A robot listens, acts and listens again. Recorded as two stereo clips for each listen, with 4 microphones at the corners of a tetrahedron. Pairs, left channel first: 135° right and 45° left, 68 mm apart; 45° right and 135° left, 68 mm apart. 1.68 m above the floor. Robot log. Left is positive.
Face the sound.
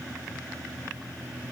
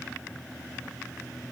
cmd idle
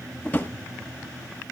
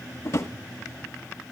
note: The drawer: 75° right.
cmd yaw -75
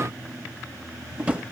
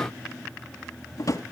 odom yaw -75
note: The drawer is now 25° right.
cmd yaw -25
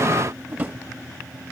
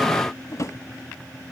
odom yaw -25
note: The drawer is now 15° right.
cmd yaw -15
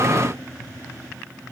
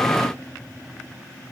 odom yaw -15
cmd idle
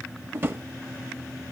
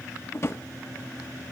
end: Facing the drawer.